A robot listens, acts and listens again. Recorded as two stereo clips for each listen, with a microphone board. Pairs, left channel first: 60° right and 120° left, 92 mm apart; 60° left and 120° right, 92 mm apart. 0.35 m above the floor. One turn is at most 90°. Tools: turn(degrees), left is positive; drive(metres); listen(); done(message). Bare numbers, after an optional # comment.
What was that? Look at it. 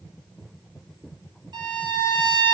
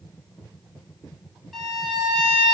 # The violin: 150° left.
turn(90)
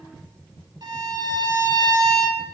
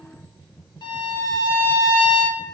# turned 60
# The violin is now 90° left.
turn(90)
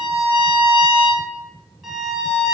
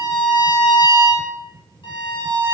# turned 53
# The violin is now 35° left.
turn(35)
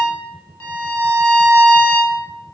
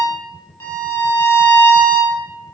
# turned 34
done("Found it: a violin, straight ahead.")